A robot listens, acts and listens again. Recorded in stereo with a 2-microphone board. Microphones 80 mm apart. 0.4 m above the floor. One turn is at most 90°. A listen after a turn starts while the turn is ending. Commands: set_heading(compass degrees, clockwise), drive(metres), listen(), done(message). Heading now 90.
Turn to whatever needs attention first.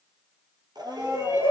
set_heading(130)
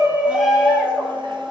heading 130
done("Facing the shout.")